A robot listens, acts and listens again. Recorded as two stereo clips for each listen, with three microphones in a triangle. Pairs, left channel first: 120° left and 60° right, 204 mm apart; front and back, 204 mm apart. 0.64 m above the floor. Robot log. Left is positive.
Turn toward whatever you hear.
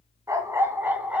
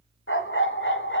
note: The dog barking: 25° left.
cmd yaw +25
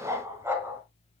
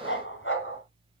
note: The dog barking is now 20° left.
cmd yaw +20
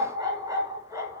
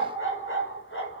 note: The dog barking is now 15° left.
cmd yaw +15
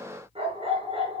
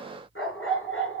end: Facing the dog barking, over 4 m away.